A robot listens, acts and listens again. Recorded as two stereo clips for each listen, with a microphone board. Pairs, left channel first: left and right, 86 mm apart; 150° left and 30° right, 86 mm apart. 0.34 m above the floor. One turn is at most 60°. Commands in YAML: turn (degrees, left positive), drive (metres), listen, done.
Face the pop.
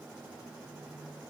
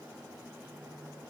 listen: true
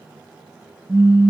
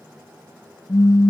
turn: -60
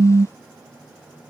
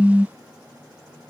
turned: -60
turn: -60
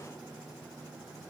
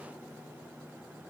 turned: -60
turn: -50
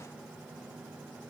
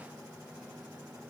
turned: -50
done: "Facing where the pop came from. I can't hear it now."